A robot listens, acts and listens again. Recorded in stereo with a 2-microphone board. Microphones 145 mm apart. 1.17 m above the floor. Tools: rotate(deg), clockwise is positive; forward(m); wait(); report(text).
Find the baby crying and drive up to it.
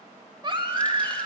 rotate(35)
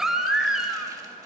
forward(1.0)
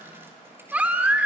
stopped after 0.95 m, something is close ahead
rotate(15)
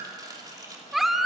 report("I am next to the baby crying.")